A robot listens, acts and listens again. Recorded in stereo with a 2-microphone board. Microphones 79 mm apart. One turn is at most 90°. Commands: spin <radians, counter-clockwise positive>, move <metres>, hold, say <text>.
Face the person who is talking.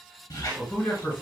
spin 0.44
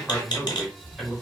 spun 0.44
say Found it: a man speaking, straight ahead, 1 to 2 m away.